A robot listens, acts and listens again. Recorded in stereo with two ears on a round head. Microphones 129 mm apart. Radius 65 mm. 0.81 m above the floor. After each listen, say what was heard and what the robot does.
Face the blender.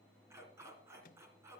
Keep listening.
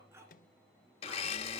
The blender: about 45° left or 135° left. Turn 45° left.
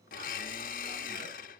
So it is at 85° left. Turn 85° left.
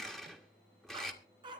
Found it: a blender, straight ahead, 1 to 2 m away.